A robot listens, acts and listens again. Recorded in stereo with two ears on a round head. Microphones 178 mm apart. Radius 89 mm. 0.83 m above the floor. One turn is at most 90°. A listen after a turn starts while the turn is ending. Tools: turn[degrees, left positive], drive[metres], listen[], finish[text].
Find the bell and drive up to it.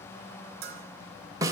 Thought: The bell: about 50° right or 130° right.
Action: turn[-50]
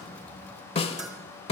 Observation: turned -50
Action: listen[]
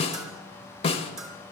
Action: drive[1.0]
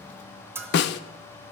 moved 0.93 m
Thought: The bell is now 10° right.
Action: turn[-10]
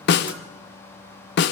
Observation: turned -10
Action: listen[]
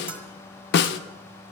Action: listen[]
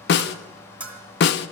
Action: drive[1.0]
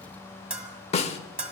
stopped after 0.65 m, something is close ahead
Action: finish[Arrived at the bell, straight ahead.]